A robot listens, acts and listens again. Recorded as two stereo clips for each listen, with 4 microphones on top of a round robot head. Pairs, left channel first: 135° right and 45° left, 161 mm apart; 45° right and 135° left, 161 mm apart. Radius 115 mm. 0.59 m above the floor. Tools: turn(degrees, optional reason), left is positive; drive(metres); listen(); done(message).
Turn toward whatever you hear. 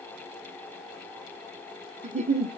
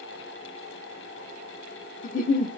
done("Found it: a giggle, straight ahead.")